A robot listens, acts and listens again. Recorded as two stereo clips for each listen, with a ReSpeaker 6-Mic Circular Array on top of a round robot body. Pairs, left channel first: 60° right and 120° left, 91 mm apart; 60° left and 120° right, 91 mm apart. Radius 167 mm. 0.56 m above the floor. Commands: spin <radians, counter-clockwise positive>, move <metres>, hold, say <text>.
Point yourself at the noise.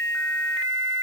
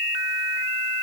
hold
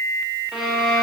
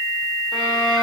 spin 0.70
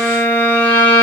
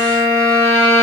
say Facing the violin.